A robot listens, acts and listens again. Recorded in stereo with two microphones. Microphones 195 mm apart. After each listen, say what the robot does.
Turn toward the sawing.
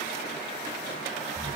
Keep listening.
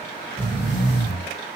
Keep listening.
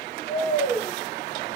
I can't make out sawing to turn to.